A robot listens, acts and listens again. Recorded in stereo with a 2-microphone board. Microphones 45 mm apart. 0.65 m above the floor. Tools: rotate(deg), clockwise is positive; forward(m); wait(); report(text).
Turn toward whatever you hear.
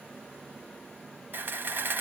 rotate(50)
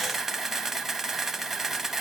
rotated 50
report("Facing the camera shutter, under 1 m away.")